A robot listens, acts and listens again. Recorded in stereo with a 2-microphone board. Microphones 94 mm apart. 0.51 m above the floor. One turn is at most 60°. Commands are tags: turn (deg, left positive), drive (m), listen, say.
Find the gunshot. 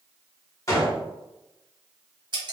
<turn deg="35"/>
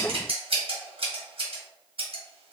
<listen/>
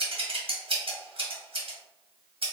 <say>I heard a gunshot, but can't make it out now. It was about straight ahead or 110° left.</say>